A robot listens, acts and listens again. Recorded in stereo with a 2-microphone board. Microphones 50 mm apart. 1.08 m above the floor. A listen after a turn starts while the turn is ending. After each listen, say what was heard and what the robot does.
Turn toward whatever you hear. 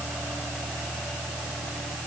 Keep listening.
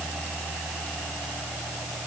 Keep listening.
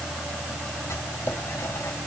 The writing: about 70° left or 110° left. Turn 70° left.
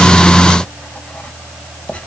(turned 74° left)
So it is at 25° left. Turn 25° left.
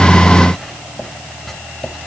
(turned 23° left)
Found it: writing, straight ahead, 2 to 4 m away.